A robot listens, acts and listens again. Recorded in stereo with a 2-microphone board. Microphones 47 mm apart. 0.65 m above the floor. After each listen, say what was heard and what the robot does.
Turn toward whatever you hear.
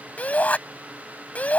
The shout: about 30° left or 150° left. Turn 30° left.
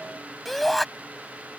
Found it: a shout, straight ahead.